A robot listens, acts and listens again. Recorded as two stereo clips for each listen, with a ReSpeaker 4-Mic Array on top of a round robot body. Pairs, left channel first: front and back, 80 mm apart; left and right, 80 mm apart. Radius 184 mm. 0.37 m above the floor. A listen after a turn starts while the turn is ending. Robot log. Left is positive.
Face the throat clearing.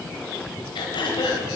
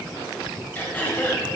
note: The throat clearing: 20° left.
cmd yaw +20
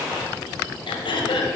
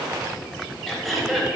end: Found it: throat clearing, straight ahead, 1 to 2 m away.